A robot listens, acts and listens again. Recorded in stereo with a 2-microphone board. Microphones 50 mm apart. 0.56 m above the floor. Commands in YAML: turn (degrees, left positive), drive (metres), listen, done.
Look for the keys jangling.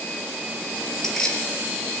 turn: 30
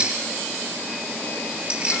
turn: -25
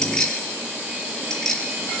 turn: 10
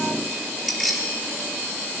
done: "Facing the keys jangling, over 4 m away."